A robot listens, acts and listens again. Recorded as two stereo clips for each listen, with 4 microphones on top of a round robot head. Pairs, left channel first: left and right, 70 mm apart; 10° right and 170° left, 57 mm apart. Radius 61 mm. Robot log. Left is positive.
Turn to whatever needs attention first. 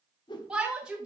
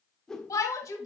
note: The shout: 15° right.
cmd yaw -15
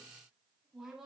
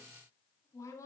end: Facing the shout, 2 to 4 m away.